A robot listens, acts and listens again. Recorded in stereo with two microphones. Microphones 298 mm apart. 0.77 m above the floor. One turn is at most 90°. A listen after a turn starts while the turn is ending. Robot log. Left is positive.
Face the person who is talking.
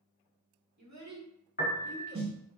note: The child speaking: about 70° right or 110° right.
cmd yaw -70
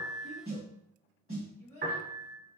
note: So it is at 50° right.
cmd yaw -50
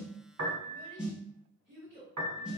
note: The child speaking is now 30° right.
cmd yaw -30
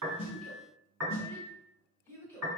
note: The child speaking is now 15° left.
cmd yaw +15
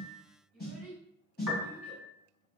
end: Facing the child speaking, 1 to 2 m away.